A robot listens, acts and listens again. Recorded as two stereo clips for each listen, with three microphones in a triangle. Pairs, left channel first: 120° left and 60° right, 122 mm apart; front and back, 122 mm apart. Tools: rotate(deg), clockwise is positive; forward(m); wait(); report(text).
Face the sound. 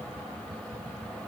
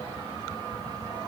wait()
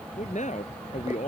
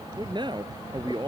rotate(-130)
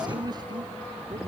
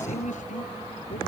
wait()
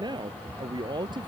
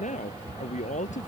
rotate(10)
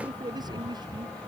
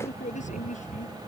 report("Facing the man speaking.")